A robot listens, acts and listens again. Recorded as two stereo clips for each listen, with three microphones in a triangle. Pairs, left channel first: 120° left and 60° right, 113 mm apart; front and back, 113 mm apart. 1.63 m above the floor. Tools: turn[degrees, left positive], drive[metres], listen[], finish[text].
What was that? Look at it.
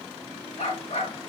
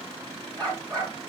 Thought: The dog barking: 125° left.
Action: turn[125]
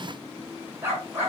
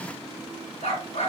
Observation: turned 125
Thought: The dog barking is now 10° left.
Action: turn[10]
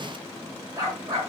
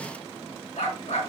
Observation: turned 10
Action: finish[Facing the dog barking.]